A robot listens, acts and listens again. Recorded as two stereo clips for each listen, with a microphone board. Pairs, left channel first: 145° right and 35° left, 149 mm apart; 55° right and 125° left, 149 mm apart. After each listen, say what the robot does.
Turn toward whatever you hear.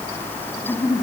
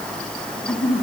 Turn 80° right.
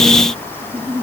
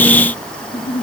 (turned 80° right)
Turn 40° right.
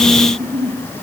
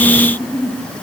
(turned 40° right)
Found it: a giggle, straight ahead, over 4 m away.